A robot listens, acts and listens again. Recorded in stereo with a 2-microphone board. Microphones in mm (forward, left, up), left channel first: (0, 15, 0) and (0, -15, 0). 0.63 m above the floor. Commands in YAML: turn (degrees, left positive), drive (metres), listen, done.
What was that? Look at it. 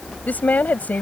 turn: 75
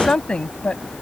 turn: 40
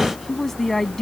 turn: 10
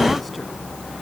listen: true
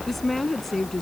done: "Found it: a woman speaking, straight ahead."